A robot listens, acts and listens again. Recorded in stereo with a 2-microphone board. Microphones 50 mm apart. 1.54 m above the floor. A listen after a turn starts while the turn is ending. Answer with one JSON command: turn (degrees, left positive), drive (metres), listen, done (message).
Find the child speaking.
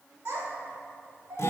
{"turn": -60}
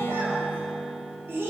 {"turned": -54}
{"turn": -55}
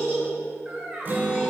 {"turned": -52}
{"turn": -20}
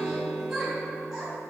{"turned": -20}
{"turn": -10}
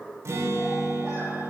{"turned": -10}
{"listen": true}
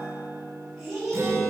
{"done": "Facing the child speaking, 2 to 4 m away."}